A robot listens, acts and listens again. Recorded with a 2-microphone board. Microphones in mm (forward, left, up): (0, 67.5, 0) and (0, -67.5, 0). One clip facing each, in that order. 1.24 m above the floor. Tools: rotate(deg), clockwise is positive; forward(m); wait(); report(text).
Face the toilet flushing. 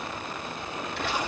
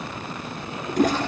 rotate(45)
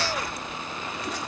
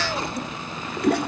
rotate(90)
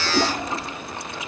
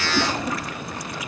rotate(-30)
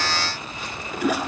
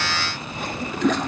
rotate(-10)
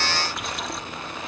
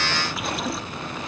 wait()
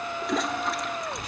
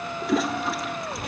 report("Facing the toilet flushing.")